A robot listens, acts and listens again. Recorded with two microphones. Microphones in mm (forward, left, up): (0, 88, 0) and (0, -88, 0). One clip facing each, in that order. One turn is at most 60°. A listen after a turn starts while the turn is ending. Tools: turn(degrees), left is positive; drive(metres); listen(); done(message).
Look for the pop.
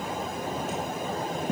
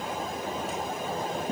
listen()
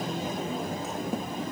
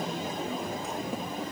listen()
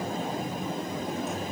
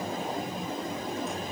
done("I can't make out a pop to turn to.")